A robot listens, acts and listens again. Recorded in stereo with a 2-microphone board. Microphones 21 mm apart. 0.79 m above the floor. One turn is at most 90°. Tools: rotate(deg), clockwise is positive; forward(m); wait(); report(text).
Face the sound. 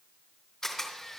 rotate(-20)
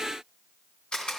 rotate(-90)
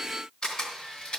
rotate(-45)
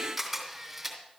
report("Facing the camera shutter.")